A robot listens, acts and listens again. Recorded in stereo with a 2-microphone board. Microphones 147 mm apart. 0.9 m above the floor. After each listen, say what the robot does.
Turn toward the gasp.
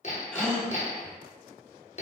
Turn 30° left.
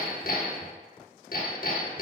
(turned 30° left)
Keep listening.
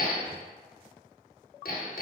I heard a gasp, but can't make it out now. It was about 25° right or 145° left.